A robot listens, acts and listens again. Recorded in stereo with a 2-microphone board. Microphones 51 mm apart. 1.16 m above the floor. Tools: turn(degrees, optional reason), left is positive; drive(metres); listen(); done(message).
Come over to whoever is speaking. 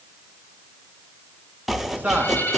turn(degrees=-35, reason="The man speaking: about 35° right or 145° right.")
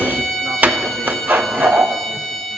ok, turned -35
listen()
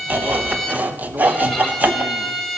listen()
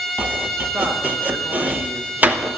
done("I heard a man speaking, but can't make it out now. It was about straight ahead or 110° right. I did not reach it.")